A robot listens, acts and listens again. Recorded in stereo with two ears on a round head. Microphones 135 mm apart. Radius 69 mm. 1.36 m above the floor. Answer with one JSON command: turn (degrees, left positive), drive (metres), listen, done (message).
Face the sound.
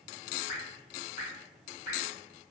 {"turn": 60}
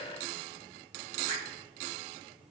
{"listen": true}
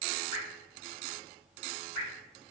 {"turn": 40}
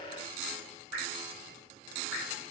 {"done": "Facing the dripping."}